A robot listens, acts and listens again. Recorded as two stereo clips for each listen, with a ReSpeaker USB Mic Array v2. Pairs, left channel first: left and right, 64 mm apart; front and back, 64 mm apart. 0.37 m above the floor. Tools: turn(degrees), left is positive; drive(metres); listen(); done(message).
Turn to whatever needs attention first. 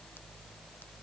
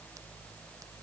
listen()
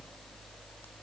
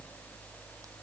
listen()
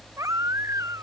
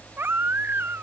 turn(degrees=-125)
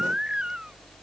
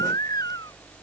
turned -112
turn(degrees=-15)
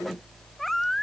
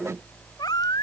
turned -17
done("Facing the baby crying.")